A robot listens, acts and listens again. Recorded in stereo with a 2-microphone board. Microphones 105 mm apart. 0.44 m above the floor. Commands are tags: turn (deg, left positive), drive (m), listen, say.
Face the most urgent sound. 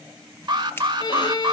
<turn deg="-45"/>
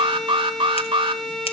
<turn deg="-80"/>
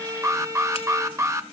<turn deg="-35"/>
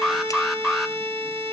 <say>Facing the alarm.</say>